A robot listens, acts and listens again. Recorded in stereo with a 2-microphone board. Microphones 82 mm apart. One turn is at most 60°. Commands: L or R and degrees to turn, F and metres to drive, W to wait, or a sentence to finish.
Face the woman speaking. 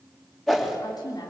L60
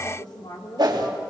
L60
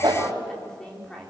Found it: a woman speaking, straight ahead, 2 to 4 m away.